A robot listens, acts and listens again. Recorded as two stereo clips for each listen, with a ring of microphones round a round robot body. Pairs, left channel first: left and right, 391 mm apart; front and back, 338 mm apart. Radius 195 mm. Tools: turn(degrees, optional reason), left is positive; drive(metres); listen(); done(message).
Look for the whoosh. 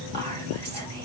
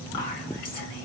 listen()
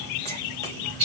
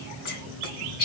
listen()
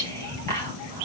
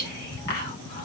done("I can't make out a whoosh, only whispering.")